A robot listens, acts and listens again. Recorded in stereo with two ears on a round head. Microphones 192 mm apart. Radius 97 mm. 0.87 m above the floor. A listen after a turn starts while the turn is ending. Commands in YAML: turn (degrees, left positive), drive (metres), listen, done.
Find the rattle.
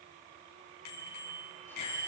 listen: true
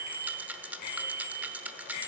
turn: -30
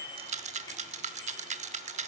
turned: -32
turn: -140
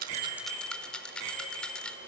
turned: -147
done: "Found it: a rattle, straight ahead."